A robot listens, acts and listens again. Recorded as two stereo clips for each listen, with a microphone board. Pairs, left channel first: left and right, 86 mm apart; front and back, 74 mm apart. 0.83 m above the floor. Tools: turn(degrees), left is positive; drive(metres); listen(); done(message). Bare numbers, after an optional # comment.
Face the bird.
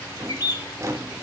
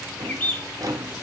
# The bird: 60° left.
turn(60)
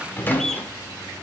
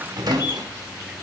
done("Facing the bird, 1 to 2 m away.")